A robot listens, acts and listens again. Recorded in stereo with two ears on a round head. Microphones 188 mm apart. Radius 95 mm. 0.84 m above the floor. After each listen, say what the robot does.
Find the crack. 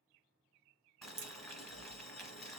Turn 65° right.
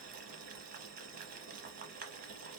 Keep listening.
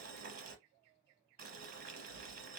I heard a crack, but can't make it out now. It was about straight ahead or 50° right.